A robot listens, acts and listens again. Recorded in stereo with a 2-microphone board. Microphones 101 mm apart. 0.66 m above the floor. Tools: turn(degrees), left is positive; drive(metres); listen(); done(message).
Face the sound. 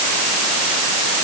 listen()
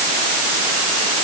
listen()
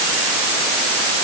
done("I can't make out anything to turn to.")